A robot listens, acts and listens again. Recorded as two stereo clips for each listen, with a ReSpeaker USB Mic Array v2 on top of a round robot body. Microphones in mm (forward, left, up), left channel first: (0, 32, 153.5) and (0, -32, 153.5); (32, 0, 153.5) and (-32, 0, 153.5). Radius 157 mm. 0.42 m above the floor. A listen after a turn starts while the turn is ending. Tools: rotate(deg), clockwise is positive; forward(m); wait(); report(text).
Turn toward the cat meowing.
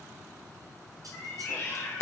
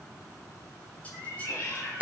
rotate(-40)
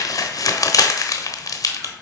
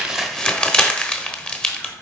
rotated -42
wait()
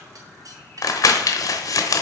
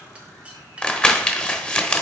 wait()
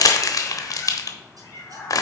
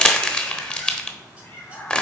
rotate(-50)
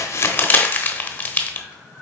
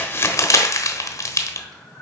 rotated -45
report("Found it: a cat meowing, straight ahead, 1 to 2 m away.")